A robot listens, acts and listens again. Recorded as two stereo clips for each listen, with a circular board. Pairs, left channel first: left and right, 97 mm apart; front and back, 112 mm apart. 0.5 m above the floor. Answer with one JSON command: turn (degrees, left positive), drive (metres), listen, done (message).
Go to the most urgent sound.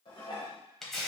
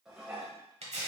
{"listen": true}
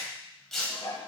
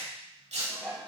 {"listen": true}
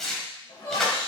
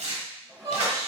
{"turn": 130}
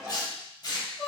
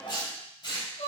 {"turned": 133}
{"drive": 1.0}
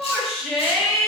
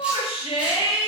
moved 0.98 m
{"turn": -10}
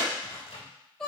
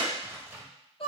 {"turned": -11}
{"drive": 1.0}
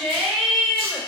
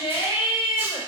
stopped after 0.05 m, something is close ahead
{"done": "Arrived at the shout, straight ahead."}